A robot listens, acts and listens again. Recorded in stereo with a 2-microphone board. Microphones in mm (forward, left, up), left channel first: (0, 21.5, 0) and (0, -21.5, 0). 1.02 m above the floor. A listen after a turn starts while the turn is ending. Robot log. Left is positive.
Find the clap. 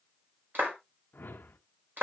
note: The clap: about 50° right or 130° right.
cmd yaw -50
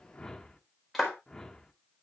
end: Found it: a clap, straight ahead.